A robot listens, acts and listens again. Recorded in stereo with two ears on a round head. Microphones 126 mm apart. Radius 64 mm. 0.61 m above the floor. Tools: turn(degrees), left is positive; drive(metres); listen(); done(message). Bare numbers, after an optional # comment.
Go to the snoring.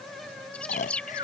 # The snoring: about 60° left or 120° left.
turn(60)
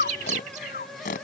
# So it is at 60° left.
turn(60)
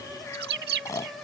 # The snoring is now 20° left.
turn(20)
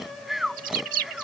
drive(1.0)
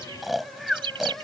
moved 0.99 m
drive(1.0)
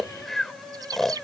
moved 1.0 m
drive(1.0)
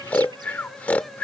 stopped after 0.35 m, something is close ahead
# The snoring is now 10° left.
turn(10)
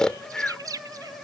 done("I am next to the snoring.")